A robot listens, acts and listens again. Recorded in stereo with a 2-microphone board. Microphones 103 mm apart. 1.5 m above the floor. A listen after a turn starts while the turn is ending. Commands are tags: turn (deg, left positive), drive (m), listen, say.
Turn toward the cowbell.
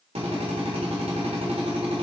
<listen/>
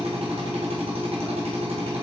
<listen/>
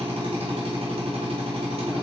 <say>I can't make out a cowbell to turn to.</say>